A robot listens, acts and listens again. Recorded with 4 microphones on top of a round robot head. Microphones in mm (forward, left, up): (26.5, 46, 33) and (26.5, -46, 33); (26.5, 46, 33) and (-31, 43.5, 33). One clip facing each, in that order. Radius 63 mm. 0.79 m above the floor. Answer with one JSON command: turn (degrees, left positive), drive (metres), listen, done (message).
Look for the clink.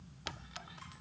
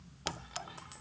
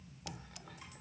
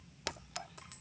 {"turn": -145}
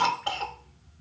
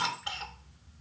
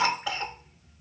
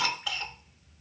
{"listen": true}
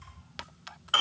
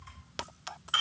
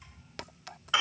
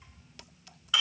{"turn": -35}
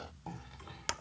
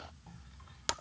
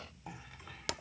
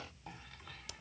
{"turn": -15}
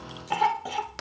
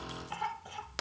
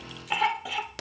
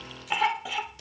{"done": "Facing the clink."}